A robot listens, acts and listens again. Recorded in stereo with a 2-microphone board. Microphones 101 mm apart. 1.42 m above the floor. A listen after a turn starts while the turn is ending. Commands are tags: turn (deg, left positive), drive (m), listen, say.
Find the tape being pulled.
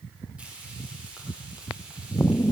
<listen/>
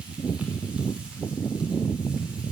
<listen/>
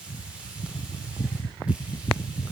<say>I can't make out tape being pulled to turn to.</say>